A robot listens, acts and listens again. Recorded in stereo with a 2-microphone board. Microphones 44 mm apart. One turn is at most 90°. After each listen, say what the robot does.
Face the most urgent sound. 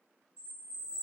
Keep listening.
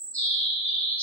Keep listening.
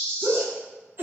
Turn 50° right.
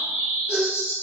Keep listening.
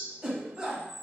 Turn 15° right.
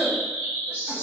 Keep listening.
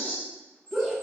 Found it: a shout, straight ahead.